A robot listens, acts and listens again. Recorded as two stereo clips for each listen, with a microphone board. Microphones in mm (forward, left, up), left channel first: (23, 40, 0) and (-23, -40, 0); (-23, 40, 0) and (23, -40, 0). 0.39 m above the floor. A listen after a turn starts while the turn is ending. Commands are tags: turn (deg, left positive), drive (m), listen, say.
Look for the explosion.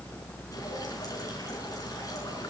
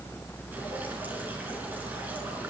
<listen/>
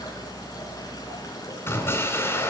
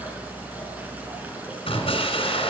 <turn deg="125"/>
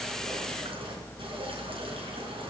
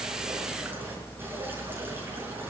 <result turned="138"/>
<turn deg="-15"/>
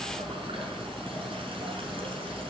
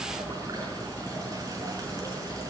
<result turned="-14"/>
<say>I heard an explosion from this way, but can't make it out now.</say>